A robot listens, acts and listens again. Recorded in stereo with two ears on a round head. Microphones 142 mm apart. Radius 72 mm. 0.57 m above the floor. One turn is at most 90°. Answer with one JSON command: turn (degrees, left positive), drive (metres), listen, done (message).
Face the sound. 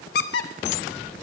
{"turn": 75}
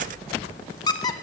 {"turn": 30}
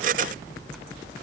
{"listen": true}
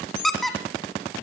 {"done": "Found it: a squeak, straight ahead."}